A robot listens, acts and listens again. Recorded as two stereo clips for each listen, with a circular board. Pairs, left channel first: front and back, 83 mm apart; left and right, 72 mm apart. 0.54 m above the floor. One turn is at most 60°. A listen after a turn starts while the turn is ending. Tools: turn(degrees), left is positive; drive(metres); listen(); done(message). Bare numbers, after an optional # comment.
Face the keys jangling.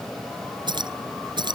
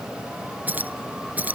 # The keys jangling: 155° right.
turn(-60)
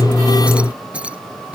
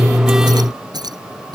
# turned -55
# The keys jangling is now 105° right.
turn(-60)
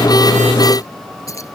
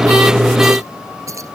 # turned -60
# The keys jangling is now 50° right.
turn(-50)
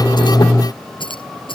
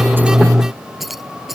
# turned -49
done("Facing the keys jangling.")